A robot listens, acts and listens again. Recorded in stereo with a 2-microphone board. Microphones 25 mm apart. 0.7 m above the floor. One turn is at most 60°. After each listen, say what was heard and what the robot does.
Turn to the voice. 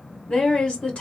The woman speaking: about 45° left or 135° left. Turn 45° left.
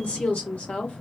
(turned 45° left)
So it is at 85° left. Turn 60° left.
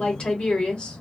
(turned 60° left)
The woman speaking is now 45° left. Turn 45° left.
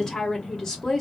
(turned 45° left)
The woman speaking is now 20° left. Turn 20° left.
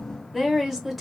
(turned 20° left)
Facing the woman speaking, 1 to 2 m away.